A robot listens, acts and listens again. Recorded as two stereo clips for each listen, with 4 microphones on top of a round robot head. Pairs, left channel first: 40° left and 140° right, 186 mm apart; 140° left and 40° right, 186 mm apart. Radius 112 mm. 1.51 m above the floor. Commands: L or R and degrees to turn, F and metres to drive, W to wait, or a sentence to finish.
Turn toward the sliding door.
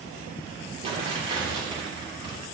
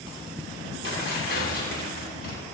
W
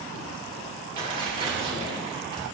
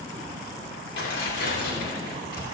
W
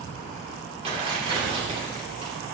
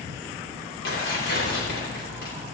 I can't make out a sliding door to turn to.